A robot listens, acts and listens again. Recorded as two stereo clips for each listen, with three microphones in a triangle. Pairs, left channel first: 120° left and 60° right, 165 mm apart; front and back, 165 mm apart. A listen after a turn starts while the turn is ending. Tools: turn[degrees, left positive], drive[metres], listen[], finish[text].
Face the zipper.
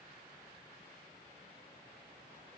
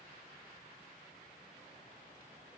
Action: listen[]
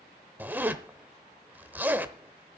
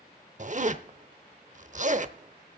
Thought: The zipper: 140° right.
Action: turn[-140]
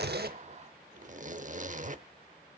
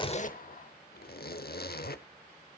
Thought: The zipper is now 20° right.
Action: turn[-20]
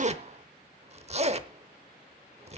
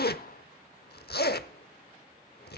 Thought: The zipper is now 10° right.
Action: turn[-10]
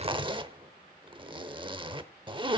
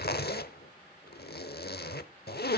Action: finish[Found it: a zipper, straight ahead.]